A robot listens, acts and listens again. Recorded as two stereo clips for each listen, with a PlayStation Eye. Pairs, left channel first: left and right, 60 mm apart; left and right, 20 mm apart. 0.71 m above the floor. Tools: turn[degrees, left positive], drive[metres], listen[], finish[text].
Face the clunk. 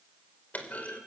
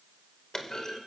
Thought: The clunk: about 30° left or 150° left.
Action: turn[30]
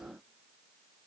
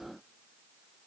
Action: listen[]
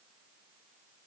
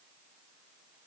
Action: finish[I heard a clunk, but can't make it out now. It was about straight ahead or 120° left.]